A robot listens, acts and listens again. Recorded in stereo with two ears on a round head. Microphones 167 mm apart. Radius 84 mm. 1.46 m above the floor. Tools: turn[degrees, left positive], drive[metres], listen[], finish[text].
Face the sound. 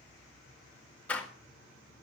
Action: turn[30]
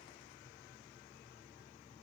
Action: listen[]
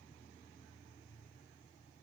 Action: finish[I heard a door slam, but can't make it out now. It was about 20° right or 140° left.]